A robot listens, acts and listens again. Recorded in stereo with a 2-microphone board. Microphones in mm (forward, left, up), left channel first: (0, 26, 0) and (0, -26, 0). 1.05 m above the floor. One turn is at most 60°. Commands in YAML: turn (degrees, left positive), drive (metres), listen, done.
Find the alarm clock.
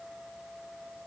listen: true
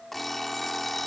turn: 30
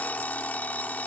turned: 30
turn: 60
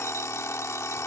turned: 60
turn: 60
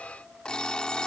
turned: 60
turn: 20
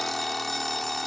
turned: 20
done: "Found it: an alarm clock, straight ahead."